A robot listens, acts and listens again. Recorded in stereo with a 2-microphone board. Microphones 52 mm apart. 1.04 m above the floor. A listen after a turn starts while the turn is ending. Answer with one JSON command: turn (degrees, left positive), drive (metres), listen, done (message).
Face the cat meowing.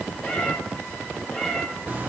{"turn": 30}
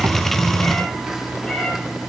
{"turn": 20}
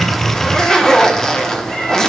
{"turn": 20}
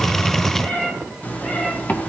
{"turn": 145}
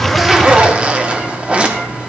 {"listen": true}
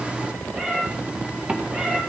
{"turn": -25}
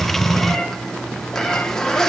{"turn": 10}
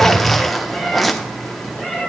{"done": "Facing the cat meowing, 2 to 4 m away."}